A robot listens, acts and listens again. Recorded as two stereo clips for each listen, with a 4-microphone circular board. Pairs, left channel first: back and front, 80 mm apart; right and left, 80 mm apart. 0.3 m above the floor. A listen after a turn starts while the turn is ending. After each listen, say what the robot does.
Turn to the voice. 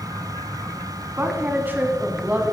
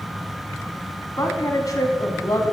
Turn 65° right.
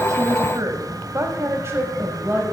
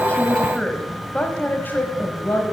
Turn 55° right.
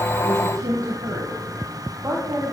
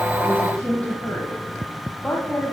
Turn 25° right.
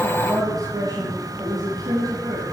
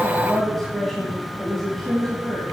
Facing the woman speaking, 1 to 2 m away.